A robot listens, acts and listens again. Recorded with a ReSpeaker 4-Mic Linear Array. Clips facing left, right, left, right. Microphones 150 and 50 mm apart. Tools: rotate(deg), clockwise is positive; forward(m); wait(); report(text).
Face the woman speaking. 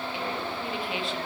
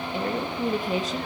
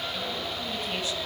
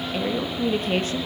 rotate(40)
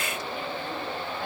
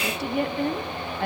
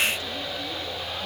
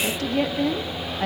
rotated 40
rotate(115)
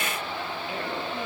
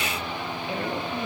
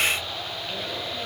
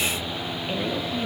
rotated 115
wait()
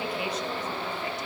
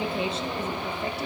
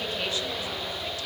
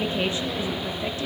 rotate(25)
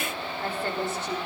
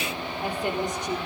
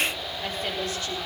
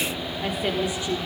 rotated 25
rotate(15)
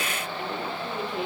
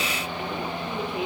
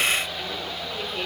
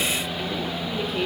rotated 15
report("Facing the woman speaking.")